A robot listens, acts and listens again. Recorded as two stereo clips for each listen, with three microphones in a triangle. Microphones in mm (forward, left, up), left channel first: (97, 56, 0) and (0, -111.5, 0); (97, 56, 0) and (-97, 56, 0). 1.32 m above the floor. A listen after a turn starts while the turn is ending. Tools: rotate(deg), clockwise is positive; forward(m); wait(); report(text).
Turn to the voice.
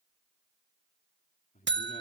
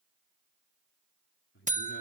rotate(-10)
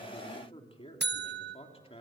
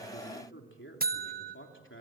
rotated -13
report("Facing the man speaking, 2 to 4 m away.")